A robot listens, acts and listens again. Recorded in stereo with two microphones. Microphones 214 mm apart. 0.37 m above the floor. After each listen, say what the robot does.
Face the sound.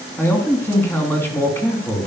Turn 30° left.
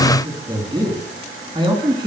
Turn 20° right.
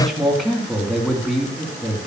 Facing the man speaking, 2 to 4 m away.